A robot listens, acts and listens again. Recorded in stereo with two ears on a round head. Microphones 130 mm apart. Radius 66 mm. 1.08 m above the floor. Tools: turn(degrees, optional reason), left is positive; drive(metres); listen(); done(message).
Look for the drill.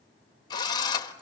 turn(degrees=30, reason="The drill: about 30° left or 150° left.")
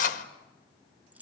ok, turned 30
turn(degrees=120, reason="So it is at 120° left.")
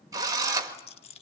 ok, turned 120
turn(degrees=-25, reason="The drill is now 25° right.")
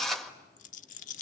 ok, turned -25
done("Found it: a drill, straight ahead, 1 to 2 m away.")